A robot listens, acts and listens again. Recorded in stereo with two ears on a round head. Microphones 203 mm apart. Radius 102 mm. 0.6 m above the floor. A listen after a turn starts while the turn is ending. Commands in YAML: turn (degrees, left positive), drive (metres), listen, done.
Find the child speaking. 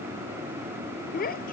turn: 40
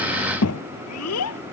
turn: 100
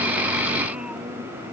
listen: true
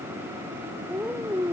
done: "Found it: a child speaking, straight ahead."